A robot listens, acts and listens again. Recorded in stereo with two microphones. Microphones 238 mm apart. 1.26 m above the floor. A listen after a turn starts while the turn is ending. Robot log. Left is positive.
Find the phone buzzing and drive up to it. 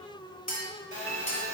note: The phone buzzing: about 35° left or 145° left.
cmd yaw +35
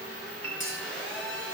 cmd fwd 1.0
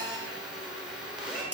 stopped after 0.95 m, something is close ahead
end: I am next to the phone buzzing.